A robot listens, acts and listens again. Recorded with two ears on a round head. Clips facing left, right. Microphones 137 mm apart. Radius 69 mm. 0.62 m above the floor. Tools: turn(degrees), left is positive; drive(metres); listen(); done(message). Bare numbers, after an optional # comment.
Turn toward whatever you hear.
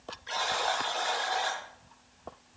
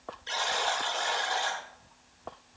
# The buzzer: about 30° right or 150° right.
turn(-30)
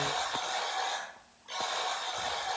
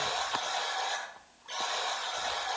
done("Found it: a buzzer, straight ahead, over 4 m away.")